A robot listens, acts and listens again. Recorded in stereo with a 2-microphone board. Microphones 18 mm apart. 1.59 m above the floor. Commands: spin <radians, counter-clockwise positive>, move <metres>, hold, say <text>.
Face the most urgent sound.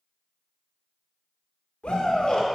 spin 1.31
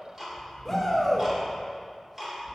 spin 0.35
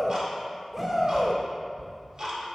say Found it: a shout, straight ahead.